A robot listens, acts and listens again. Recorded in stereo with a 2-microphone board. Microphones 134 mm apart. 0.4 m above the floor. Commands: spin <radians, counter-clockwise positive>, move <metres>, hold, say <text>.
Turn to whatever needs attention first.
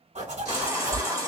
spin -0.44
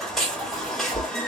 say Facing the baby crying.